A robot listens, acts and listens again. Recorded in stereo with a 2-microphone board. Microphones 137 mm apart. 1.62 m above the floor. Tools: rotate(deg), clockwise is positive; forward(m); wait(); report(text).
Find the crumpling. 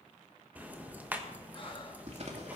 rotate(50)
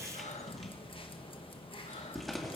report("Found it: crumpling, straight ahead, 2 to 4 m away.")